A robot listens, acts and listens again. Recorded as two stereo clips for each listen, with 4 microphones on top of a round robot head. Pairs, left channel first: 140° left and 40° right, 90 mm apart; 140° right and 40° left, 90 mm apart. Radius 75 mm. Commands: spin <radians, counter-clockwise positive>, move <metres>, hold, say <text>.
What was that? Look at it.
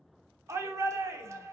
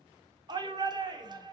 spin 0.17
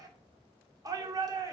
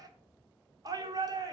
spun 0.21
say Found it: a shout, straight ahead.